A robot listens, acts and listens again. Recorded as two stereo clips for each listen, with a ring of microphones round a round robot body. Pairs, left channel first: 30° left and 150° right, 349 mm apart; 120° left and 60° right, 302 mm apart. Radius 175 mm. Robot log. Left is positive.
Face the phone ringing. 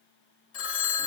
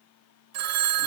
note: The phone ringing: 25° right.
cmd yaw -25
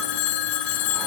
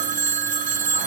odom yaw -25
end: Facing the phone ringing.